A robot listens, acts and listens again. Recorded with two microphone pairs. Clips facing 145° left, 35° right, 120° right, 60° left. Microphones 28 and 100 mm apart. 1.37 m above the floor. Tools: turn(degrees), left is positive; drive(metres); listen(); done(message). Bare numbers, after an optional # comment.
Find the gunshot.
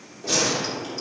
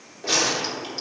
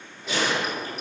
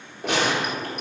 # The gunshot: 35° left.
turn(35)
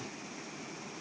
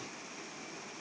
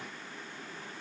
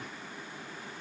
done("Facing where the gunshot came from. I can't hear it now.")